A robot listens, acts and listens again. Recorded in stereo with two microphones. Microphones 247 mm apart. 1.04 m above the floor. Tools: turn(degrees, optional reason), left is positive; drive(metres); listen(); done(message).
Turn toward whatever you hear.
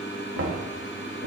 turn(degrees=-60, reason="The knocking: about 60° right or 120° right.")
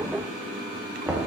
done("Found it: knocking, straight ahead.")